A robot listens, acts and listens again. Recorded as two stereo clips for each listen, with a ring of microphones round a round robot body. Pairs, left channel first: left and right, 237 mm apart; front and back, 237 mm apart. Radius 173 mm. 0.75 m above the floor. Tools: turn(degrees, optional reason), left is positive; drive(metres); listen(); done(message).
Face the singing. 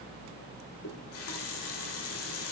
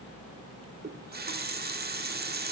listen()
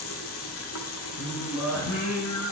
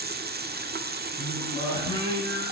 turn(degrees=70, reason="The singing: 70° left.")
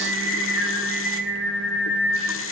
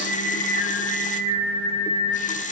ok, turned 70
done("Facing the singing, over 4 m away.")